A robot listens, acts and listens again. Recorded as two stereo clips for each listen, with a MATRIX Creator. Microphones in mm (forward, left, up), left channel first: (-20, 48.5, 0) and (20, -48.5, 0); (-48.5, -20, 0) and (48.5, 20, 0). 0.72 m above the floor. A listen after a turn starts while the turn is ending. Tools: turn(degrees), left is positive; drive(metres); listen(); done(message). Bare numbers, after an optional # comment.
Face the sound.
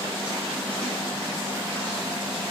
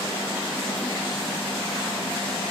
listen()
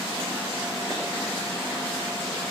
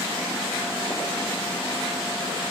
listen()
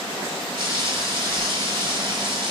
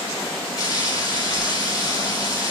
# The frying: 105° right.
turn(-105)
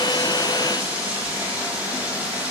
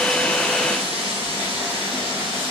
listen()
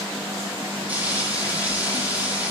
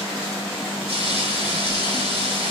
# The frying is now 10° left.
turn(10)
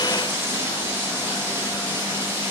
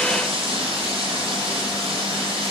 done("Facing the frying, 2 to 4 m away.")